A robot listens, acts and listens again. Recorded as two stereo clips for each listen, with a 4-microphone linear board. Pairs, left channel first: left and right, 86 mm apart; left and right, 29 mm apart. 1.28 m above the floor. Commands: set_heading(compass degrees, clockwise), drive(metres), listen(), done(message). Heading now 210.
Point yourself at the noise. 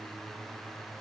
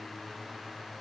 listen()
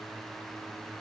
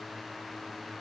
listen()
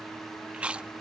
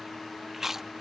set_heading(240)
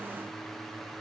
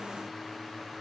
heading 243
listen()
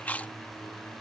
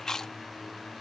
set_heading(223)
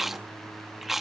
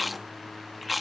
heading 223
done("Found it: chewing, straight ahead.")